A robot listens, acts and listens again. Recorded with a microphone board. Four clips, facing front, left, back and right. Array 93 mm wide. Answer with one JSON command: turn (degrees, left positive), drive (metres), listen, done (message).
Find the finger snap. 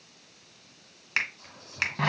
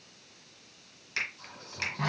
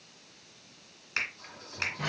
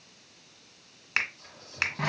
{"turn": -60}
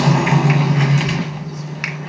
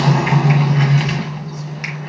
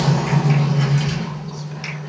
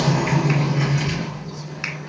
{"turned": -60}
{"listen": true}
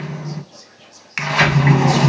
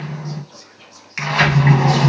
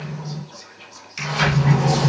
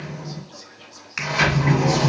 {"done": "Facing the finger snap, 1 to 2 m away."}